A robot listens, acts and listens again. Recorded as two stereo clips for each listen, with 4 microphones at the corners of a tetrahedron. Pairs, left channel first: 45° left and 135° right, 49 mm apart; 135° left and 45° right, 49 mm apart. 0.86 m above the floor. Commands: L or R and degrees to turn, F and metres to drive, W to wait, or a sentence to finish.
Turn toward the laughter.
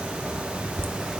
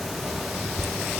R140
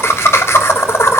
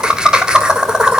L25
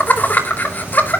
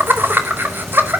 Facing the laughter, 2 to 4 m away.